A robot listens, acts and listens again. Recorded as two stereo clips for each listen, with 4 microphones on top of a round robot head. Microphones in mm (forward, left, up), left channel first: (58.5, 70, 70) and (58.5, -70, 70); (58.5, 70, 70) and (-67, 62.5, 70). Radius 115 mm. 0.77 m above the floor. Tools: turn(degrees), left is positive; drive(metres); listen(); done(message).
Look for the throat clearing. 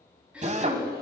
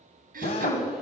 turn(degrees=-175)
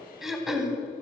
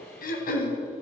done("Found it: throat clearing, straight ahead, 2 to 4 m away.")